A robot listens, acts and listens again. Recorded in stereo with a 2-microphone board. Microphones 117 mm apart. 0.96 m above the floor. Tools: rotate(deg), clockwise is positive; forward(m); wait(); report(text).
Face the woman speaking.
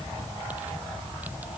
wait()
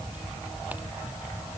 wait()
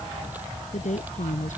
rotate(-90)
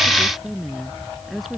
report("Facing the woman speaking.")